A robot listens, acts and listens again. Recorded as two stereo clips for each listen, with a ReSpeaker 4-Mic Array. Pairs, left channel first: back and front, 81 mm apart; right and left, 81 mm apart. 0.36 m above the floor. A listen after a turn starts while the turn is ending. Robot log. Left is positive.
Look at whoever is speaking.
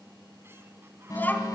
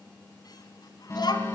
note: The child speaking: 115° right.
cmd yaw -115
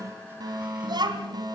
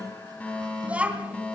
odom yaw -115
note: The child speaking is now 15° left.
cmd yaw +15
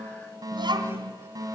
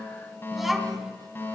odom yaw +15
end: Found it: a child speaking, straight ahead, 2 to 4 m away.